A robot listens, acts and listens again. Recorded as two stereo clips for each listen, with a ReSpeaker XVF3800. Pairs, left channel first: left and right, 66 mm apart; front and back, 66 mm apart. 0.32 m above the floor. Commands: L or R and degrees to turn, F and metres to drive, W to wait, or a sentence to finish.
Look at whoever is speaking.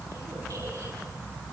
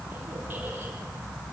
W
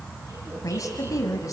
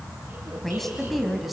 L95
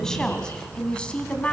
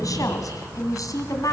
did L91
L20
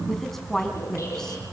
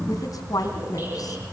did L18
L10
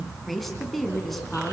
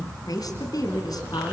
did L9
Facing the woman speaking.